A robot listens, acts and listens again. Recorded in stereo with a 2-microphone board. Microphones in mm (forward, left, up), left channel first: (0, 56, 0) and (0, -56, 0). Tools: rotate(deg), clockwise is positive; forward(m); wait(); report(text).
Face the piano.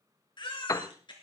rotate(-30)
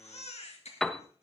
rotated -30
report("Found it: a piano, straight ahead.")